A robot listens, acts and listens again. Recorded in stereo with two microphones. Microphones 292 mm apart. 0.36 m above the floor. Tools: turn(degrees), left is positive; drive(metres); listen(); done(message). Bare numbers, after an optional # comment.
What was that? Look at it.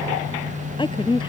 # The woman speaking: about 15° left or 165° left.
turn(15)
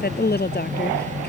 # So it is at 145° left.
turn(145)
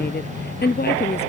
# The woman speaking is now 35° left.
turn(35)
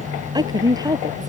# The woman speaking is now 15° right.
turn(-15)
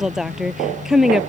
done("Found it: a woman speaking, straight ahead.")